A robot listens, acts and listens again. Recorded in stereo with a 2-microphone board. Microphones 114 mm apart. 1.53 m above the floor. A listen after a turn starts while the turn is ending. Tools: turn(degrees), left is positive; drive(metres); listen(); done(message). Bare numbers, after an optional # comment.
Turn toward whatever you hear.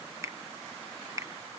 # The finger snap: about 30° right or 150° right.
turn(-30)
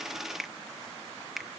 done("Found it: a finger snap, straight ahead.")